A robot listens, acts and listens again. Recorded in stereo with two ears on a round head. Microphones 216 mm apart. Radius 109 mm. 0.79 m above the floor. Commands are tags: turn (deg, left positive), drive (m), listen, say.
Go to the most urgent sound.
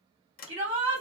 <turn deg="-50"/>
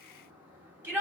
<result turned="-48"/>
<turn deg="-10"/>
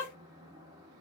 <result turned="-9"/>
<listen/>
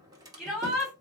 <drive m="1.0"/>
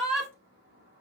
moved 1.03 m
<drive m="1.0"/>
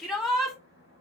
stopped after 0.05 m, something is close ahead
<say>I am next to the shout.</say>